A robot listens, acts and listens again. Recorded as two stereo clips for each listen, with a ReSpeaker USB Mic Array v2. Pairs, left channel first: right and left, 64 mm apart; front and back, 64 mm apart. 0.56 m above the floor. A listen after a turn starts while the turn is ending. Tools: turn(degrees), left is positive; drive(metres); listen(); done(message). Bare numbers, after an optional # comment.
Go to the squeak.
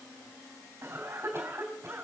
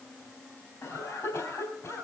listen()
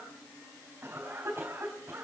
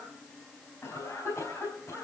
listen()
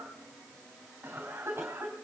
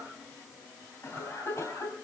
done("I can't make out a squeak to turn to.")